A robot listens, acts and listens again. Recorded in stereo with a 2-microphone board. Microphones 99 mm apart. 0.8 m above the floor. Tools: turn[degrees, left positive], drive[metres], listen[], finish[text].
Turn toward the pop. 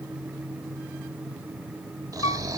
Action: listen[]
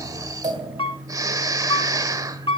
Action: turn[-90]
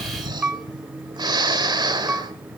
Action: finish[I heard a pop from this way, but can't make it out now.]